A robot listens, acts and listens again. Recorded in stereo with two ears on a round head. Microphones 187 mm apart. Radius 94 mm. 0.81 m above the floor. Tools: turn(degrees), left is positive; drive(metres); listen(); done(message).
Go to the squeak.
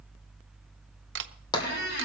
turn(degrees=55)
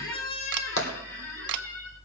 turn(degrees=70)
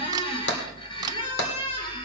turn(degrees=25)
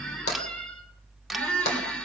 drive(metres=1.0)
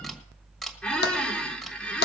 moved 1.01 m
drive(metres=1.0)
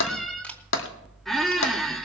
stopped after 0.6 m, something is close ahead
done("Arrived at the squeak, straight ahead.")